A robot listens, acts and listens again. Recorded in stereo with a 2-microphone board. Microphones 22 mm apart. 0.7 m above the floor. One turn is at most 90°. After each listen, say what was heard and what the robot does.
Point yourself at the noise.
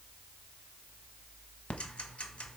The ticking: about 65° left or 115° left. Turn 65° left.
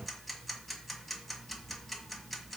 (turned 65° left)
Facing the ticking.